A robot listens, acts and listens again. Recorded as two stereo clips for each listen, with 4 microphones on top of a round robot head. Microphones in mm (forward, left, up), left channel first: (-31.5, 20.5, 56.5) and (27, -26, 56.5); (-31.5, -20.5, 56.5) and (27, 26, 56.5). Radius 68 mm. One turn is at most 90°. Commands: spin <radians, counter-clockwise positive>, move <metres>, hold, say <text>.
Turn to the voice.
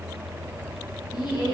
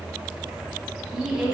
spin 1.57
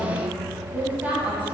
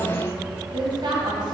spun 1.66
spin 0.52
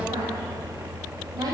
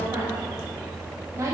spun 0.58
say Facing the woman speaking.